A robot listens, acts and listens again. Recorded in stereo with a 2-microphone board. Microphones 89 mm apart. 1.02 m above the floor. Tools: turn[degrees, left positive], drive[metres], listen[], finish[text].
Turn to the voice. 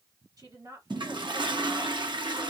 Thought: The woman speaking: about 40° right or 140° right.
Action: turn[-40]
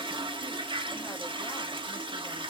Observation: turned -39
Action: listen[]
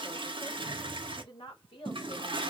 Thought: The woman speaking: about 75° left or 105° left.
Action: turn[75]
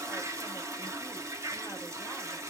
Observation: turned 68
Action: listen[]
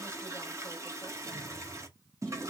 Action: listen[]
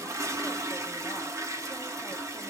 Action: finish[I heard a woman speaking, but can't make it out now. It was about 5° left or 35° left.]